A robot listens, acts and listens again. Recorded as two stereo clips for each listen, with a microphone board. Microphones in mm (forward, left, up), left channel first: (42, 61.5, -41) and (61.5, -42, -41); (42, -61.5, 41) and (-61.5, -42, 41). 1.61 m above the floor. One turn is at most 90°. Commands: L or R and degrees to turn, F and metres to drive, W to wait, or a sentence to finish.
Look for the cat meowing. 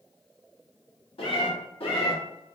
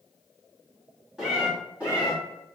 L90
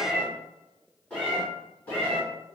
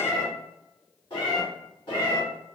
L30
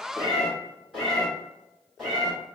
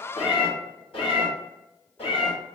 L15
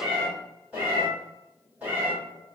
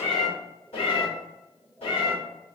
Facing the cat meowing.